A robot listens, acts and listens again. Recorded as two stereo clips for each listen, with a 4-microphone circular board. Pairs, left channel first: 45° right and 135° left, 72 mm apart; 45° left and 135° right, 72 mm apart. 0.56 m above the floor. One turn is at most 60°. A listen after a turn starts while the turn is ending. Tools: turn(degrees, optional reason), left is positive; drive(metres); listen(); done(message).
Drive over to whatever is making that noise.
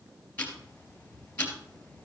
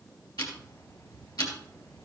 turn(degrees=25, reason="The ticking: 25° left.")
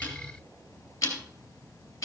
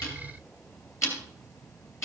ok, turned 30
drive(metres=1.0)
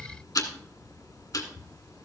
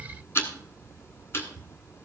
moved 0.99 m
drive(metres=1.0)
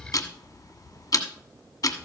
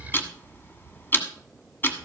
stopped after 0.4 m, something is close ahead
turn(degrees=-15, reason="The ticking is now 15° right.")
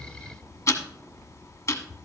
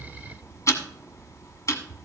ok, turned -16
done("Arrived at the ticking, straight ahead.")